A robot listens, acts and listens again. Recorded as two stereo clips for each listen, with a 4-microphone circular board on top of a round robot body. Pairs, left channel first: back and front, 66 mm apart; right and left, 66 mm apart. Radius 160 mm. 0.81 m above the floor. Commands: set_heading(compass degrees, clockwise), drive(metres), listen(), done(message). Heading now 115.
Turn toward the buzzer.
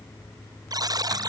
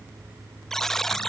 done("Found it: a buzzer, straight ahead.")